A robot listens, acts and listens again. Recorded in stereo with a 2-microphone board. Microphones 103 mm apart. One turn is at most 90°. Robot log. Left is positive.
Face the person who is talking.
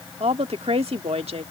note: The woman speaking: about 75° right or 105° right.
cmd yaw -75
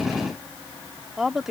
end: Found it: a woman speaking, straight ahead.